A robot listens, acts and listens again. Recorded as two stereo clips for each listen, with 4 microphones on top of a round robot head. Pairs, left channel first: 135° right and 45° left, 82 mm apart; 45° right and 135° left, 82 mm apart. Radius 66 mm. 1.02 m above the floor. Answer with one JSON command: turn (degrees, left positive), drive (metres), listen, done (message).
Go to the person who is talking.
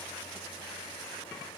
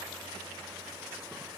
{"listen": true}
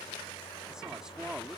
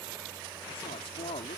{"turn": -40}
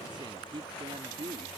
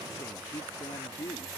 {"turn": 10}
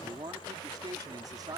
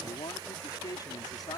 {"drive": 1.0}
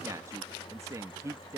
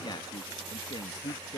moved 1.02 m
{"turn": -10}
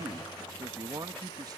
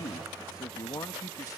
{"drive": 1.0}
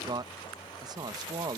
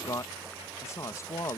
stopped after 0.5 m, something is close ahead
{"turn": 10}
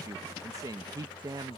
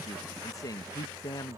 {"done": "I am next to the woman speaking."}